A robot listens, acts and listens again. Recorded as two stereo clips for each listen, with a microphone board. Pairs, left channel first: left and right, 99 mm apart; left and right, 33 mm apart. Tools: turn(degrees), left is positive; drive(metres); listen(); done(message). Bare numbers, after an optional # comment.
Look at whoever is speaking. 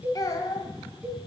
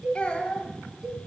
# The child speaking: about 40° left or 140° left.
turn(40)
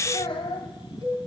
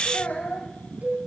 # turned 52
# So it is at 85° left.
turn(85)
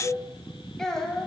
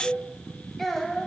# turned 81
done("Found it: a child speaking, straight ahead, 1 to 2 m away.")